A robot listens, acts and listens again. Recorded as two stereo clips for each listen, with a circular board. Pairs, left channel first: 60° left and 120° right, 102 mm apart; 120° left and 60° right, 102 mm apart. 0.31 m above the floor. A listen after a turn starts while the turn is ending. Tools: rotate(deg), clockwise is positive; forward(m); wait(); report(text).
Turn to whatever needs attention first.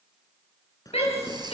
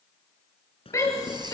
rotate(-60)
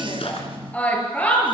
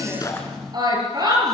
rotate(15)
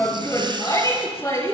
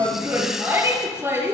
report("Found it: a shout, straight ahead, over 4 m away.")